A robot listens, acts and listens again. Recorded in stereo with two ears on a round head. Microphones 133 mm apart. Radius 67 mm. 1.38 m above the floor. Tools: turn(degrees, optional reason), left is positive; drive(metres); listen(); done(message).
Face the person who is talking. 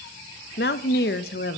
turn(degrees=90)
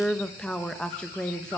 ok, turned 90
done("Found it: a woman speaking, straight ahead, 1 to 2 m away.")